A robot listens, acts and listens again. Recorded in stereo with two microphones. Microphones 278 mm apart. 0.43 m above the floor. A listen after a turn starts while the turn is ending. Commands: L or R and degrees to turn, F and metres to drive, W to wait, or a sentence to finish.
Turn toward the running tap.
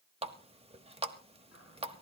R20
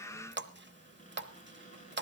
R135
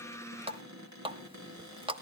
R20
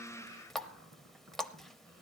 Facing the running tap, 1 to 2 m away.